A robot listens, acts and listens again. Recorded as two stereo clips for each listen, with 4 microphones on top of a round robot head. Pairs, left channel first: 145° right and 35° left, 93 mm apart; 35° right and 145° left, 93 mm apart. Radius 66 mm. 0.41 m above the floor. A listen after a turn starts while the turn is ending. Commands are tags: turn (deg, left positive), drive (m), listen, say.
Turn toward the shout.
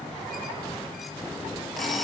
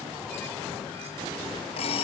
<listen/>
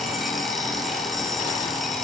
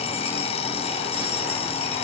<listen/>
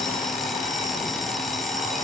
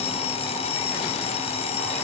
<say>I can't make out a shout to turn to.</say>